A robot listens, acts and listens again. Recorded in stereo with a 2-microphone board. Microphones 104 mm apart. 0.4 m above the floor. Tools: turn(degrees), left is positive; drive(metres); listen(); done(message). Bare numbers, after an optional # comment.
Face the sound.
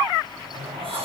# The sliding door: about 65° right or 115° right.
turn(-65)
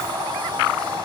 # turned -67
# So it is at 50° right.
turn(-50)
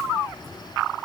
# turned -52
done("Found it: a sliding door, straight ahead.")